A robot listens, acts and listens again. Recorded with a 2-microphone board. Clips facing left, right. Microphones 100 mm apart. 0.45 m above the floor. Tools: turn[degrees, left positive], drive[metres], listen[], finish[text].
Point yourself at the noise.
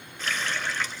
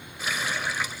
Action: turn[-30]
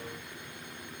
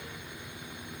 Action: listen[]
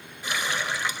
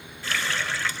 Thought: So it is at 20° left.
Action: turn[20]
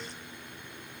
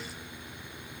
Action: listen[]
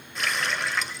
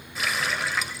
Action: finish[Found it: a running tap, straight ahead.]